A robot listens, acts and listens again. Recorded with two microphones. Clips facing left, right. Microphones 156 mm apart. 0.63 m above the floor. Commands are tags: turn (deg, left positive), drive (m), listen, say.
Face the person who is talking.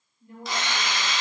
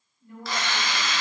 <turn deg="25"/>
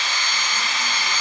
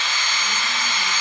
<listen/>
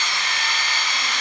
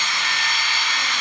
<listen/>
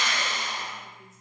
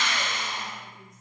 <say>I heard a woman speaking, but can't make it out now. It was about straight ahead or 130° left.</say>